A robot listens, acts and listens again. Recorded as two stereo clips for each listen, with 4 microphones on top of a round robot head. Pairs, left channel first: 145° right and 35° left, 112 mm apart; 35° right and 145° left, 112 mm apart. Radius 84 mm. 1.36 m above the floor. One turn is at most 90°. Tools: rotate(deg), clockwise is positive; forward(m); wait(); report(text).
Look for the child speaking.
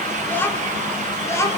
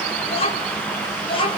rotate(80)
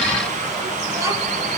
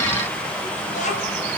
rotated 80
wait()
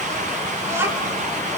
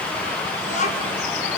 rotate(35)
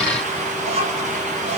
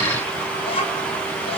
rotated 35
report("Facing the child speaking, over 4 m away.")